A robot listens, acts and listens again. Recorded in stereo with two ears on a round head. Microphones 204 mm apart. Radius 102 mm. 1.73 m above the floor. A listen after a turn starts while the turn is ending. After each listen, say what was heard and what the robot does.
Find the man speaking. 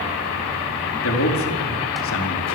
The man speaking: about 65° left or 115° left. Turn 65° left.
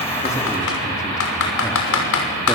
Keep listening.
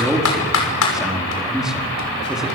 Facing the man speaking.